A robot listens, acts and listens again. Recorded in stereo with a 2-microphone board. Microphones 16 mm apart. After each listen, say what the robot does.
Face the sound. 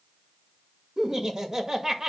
Turn 30° right.
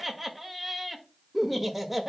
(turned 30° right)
Found it: laughter, straight ahead.